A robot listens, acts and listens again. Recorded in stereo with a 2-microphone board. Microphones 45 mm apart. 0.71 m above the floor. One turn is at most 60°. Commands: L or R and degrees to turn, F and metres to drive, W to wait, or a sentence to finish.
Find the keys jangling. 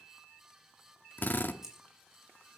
R30
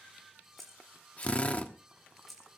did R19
L30
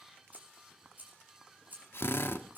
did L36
R40
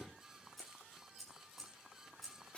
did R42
Facing the keys jangling.